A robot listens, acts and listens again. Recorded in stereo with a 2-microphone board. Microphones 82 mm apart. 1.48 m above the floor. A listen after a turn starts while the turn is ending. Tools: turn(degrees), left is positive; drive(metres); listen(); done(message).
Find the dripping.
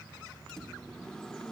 listen()
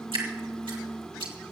turn(degrees=-90)
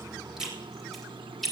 done("Found it: dripping, straight ahead, 2 to 4 m away.")